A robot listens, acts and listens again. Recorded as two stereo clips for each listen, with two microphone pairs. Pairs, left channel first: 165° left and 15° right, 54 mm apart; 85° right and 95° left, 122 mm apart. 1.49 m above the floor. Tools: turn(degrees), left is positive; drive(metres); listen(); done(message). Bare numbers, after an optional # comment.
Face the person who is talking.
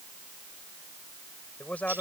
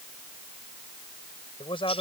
# The man speaking: 130° right.
turn(-130)
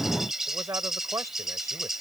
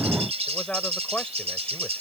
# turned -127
done("Found it: a man speaking, straight ahead.")